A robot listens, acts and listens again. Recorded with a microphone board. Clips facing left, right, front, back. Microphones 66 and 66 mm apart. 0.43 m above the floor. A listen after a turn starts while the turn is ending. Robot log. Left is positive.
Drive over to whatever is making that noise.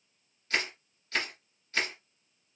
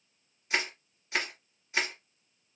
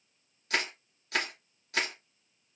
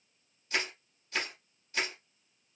note: The crushing: 15° right.
cmd yaw -15
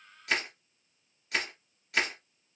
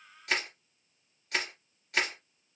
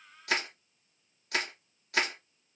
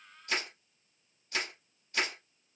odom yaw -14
cmd fwd 1.0
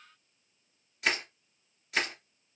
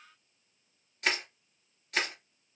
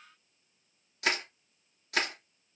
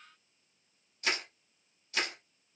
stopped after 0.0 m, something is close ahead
end: Something is in my way. I am facing the crushing but have not reached it.